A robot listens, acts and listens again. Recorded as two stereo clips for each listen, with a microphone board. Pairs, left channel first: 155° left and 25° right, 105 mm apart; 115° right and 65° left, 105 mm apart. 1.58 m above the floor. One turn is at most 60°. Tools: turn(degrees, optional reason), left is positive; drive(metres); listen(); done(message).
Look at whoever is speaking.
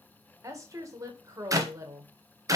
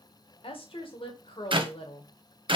turn(degrees=-60, reason="The woman speaking: 80° right.")
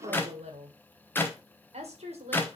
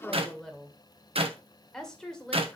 turn(degrees=-30, reason="The woman speaking is now 30° right.")
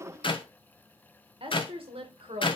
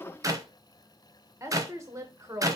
done("Found it: a woman speaking, straight ahead, 1 to 2 m away.")